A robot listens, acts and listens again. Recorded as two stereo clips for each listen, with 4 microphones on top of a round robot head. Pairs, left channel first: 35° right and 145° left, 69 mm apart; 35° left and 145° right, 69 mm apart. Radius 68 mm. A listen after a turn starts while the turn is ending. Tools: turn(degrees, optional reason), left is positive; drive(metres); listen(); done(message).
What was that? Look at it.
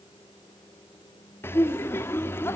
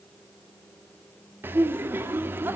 turn(degrees=-90, reason="The laughter: 90° right.")
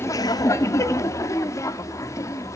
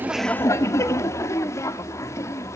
done("Found it: laughter, straight ahead, 1 to 2 m away.")